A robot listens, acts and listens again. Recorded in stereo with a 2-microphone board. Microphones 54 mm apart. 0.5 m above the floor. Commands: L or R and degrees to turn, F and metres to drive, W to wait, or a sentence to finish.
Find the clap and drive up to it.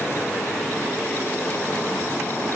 W
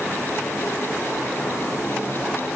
W
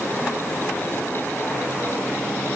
I can't make out a clap to turn to.